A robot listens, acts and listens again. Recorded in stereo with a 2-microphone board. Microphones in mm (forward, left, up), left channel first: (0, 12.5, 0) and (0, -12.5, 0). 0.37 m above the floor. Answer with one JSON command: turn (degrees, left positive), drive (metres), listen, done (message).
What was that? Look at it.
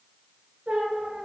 {"turn": -55}
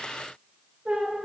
{"turn": -70}
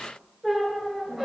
{"turn": -15}
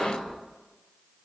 {"done": "Found it: a squeak, straight ahead."}